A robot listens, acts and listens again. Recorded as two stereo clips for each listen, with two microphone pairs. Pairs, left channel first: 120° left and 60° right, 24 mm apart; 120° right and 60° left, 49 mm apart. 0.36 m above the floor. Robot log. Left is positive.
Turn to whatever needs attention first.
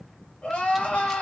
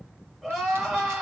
note: The crying: 145° left.
cmd yaw +145
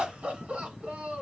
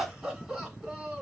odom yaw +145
note: The crying is now 25° right.
cmd yaw -25
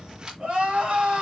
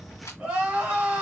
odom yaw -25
note: The crying is now 10° right.
cmd yaw -10
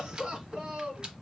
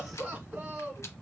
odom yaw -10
end: Facing the crying.